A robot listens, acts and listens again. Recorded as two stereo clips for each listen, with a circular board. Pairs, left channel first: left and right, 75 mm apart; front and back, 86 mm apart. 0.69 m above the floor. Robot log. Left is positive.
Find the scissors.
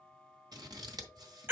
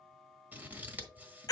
note: The scissors: 110° right.
cmd yaw -110
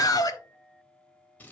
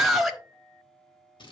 note: The scissors is now 25° left.
cmd yaw +25
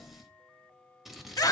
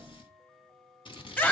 end: Found it: scissors, straight ahead.